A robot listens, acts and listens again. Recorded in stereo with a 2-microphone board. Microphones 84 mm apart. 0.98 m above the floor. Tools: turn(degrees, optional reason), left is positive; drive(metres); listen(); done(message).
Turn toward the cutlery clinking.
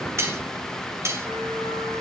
turn(degrees=-35, reason="The cutlery clinking: about 35° right or 145° right.")
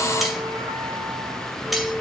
listen()
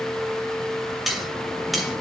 done("Found it: cutlery clinking, straight ahead.")